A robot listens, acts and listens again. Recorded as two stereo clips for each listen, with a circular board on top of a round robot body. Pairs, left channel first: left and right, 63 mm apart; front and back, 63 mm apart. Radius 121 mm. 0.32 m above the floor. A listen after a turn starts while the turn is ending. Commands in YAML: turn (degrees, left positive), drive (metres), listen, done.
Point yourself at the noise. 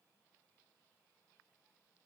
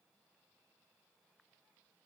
listen: true
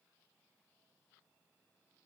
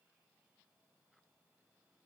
listen: true
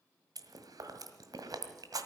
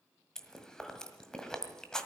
turn: -80
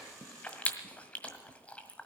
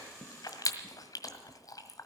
turn: 20
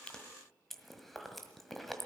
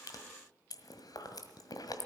done: "Found it: chewing, straight ahead, 1 to 2 m away."